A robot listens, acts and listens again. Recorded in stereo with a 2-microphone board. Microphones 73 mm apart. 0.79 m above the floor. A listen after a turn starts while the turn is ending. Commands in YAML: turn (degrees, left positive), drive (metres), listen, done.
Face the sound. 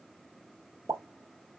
turn: -40
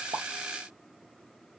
listen: true
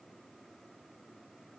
done: "I heard a pop, but can't make it out now. It was about straight ahead or 100° right."